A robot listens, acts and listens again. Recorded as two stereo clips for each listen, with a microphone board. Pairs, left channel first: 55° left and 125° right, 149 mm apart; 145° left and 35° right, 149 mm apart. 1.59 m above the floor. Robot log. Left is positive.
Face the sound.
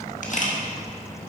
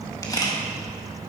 note: The camera shutter: 80° left.
cmd yaw +80
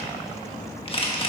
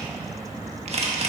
end: Found it: a camera shutter, straight ahead.